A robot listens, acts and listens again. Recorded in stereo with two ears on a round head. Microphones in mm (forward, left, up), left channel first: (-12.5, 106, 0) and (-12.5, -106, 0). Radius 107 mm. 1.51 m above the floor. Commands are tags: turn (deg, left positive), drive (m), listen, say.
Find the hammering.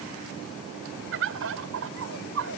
<listen/>
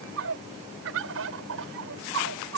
<listen/>
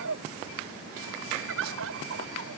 <say>I can't make out hammering, only a bird.</say>